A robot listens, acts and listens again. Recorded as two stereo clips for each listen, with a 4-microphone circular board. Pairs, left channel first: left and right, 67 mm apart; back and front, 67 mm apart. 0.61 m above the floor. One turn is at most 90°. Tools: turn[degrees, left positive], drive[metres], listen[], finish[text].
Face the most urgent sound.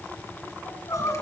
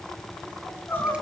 Thought: The crying: 115° left.
Action: turn[90]
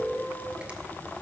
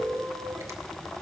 Thought: Nothing new. It was at 25° left.
Action: turn[25]
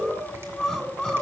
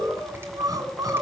Action: finish[Facing the crying.]